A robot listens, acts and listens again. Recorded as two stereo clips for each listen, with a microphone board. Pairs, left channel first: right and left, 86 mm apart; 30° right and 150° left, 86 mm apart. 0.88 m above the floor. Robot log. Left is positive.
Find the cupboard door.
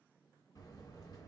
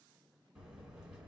cmd idle
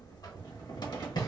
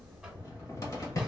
note: The cupboard door: 75° right.
cmd yaw -75
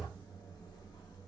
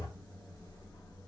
cmd idle
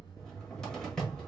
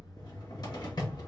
note: The cupboard door is now 10° right.
cmd yaw -10
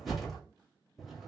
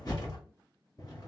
end: Facing the cupboard door.